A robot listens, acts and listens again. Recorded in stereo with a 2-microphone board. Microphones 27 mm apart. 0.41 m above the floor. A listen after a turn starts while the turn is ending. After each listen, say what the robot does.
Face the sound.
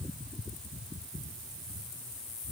Keep listening.
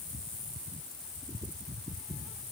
Keep listening.
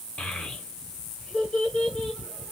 Turn 50° left.
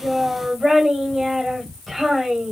Turn 10° left.
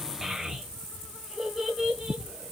Found it: a child speaking, straight ahead, 1 to 2 m away.